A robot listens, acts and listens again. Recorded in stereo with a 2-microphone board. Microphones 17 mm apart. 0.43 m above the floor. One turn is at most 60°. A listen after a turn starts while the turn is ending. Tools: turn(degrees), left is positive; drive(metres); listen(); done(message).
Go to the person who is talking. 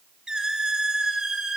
listen()
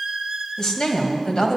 turn(degrees=45)
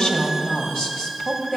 turn(degrees=60)
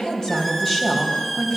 turn(degrees=25)
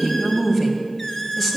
turn(degrees=15)
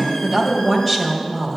drive(metres=1.0)
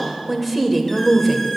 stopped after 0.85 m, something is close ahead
done("Arrived at the woman speaking, straight ahead.")